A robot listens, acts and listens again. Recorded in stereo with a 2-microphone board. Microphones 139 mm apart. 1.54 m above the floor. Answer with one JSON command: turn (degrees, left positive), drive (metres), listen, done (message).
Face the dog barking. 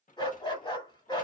{"turn": 30}
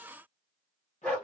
{"turn": 10}
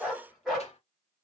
{"done": "Facing the dog barking."}